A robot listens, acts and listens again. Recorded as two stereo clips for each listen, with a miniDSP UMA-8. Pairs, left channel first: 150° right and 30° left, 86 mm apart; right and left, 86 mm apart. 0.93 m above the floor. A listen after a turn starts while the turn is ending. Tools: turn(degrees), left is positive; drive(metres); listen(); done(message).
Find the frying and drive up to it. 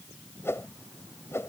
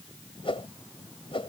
listen()
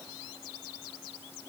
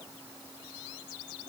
listen()
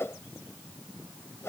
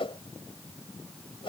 done("I can't make out frying to turn to.")